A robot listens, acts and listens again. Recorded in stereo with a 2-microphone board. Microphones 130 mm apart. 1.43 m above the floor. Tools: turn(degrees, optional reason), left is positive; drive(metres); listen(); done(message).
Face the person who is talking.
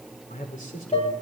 turn(degrees=90)
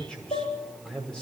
done("Found it: a man speaking, straight ahead, over 4 m away.")